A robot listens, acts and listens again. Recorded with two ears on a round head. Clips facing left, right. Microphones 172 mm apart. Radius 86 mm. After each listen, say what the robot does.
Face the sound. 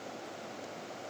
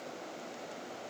Keep listening.
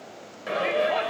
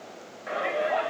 Turn 45° left.
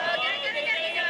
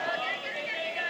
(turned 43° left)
Turn 85° left.
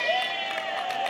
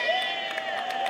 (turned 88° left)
Facing the shout.